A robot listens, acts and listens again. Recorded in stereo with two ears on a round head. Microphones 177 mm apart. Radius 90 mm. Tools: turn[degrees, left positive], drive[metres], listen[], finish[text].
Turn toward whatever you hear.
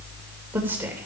Action: turn[-30]
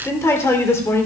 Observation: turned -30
Thought: So it is at 15° left.
Action: turn[15]
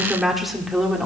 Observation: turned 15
Action: finish[Found it: a woman speaking, straight ahead.]